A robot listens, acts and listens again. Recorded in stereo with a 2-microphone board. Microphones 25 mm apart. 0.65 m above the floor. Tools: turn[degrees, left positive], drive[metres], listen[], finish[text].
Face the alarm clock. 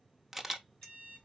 Thought: The alarm clock: about 50° left or 130° left.
Action: turn[50]
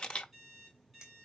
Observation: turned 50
Action: finish[Found it: an alarm clock, straight ahead, 2 to 4 m away.]